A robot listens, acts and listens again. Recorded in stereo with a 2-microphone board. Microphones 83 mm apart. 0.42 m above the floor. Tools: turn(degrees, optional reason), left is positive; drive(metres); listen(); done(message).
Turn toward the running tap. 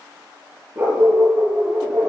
listen()
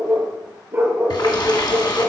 turn(degrees=65, reason="The running tap: about 65° left or 115° left.")
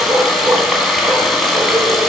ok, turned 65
done("Facing the running tap, 2 to 4 m away.")